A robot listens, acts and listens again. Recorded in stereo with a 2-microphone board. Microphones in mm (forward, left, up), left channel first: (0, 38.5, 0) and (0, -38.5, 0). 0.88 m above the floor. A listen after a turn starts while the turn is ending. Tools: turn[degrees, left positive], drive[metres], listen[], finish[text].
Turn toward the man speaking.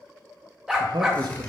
Thought: The man speaking: about 70° right or 110° right.
Action: turn[-70]
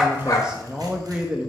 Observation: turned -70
Thought: So it is at 10° right.
Action: turn[-10]
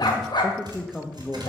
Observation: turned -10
Action: finish[Facing the man speaking, under 1 m away.]